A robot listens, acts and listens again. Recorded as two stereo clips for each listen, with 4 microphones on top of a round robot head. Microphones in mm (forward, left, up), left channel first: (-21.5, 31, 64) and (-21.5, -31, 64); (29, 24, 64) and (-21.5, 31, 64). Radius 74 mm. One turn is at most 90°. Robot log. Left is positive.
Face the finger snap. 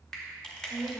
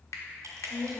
note: The finger snap: 10° left.
cmd yaw +10
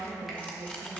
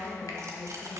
cmd idle
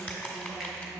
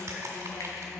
cmd idle
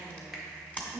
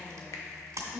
end: Facing where the finger snap came from. I can't hear it now.